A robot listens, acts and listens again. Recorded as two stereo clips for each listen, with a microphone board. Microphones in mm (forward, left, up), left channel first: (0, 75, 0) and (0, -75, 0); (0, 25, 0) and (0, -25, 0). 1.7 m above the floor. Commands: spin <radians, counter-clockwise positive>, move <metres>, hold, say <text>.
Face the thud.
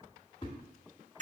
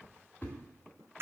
spin 0.52
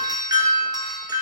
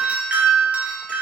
hold
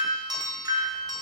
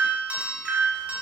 say I heard a thud, but can't make it out now. It was about straight ahead or 120° left.